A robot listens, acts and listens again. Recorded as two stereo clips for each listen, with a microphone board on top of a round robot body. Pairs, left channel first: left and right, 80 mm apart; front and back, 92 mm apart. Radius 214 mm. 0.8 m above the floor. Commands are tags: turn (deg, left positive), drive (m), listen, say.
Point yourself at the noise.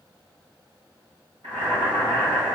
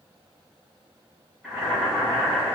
<turn deg="-90"/>
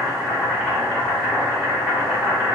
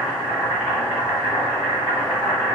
<say>Found it: boiling, straight ahead, 1 to 2 m away.</say>